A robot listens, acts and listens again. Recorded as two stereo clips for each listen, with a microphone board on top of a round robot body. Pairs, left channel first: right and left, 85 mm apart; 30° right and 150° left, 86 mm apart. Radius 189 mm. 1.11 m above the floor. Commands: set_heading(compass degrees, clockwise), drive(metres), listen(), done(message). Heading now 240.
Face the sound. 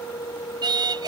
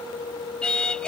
set_heading(190)
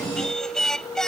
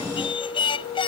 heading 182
done("Facing the singing.")